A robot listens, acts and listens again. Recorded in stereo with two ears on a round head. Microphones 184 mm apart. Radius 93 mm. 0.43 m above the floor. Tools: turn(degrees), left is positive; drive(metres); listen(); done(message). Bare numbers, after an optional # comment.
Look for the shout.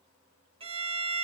listen()
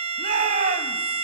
# The shout: about 40° right or 140° right.
turn(-40)
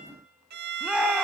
done("Facing the shout.")